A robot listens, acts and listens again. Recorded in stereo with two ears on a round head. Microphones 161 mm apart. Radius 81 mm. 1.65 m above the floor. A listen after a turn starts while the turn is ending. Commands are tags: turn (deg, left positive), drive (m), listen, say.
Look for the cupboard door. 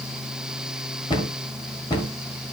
<turn deg="25"/>
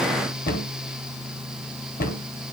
<turn deg="130"/>
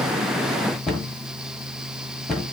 <say>Facing the cupboard door, 1 to 2 m away.</say>